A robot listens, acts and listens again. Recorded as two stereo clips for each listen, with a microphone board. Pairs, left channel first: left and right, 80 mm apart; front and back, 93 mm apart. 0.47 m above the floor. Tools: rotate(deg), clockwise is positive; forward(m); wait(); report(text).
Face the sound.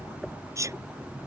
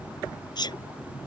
rotate(40)
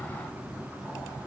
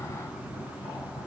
report("I heard a sneeze from this way, but can't make it out now.")